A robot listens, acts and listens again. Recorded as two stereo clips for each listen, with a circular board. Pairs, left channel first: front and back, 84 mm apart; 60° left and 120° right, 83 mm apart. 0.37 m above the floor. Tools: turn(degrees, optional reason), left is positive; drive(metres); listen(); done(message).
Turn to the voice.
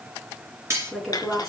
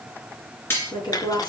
turn(degrees=90, reason="The woman speaking: 90° left.")
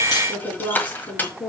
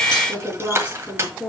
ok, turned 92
done("Facing the woman speaking.")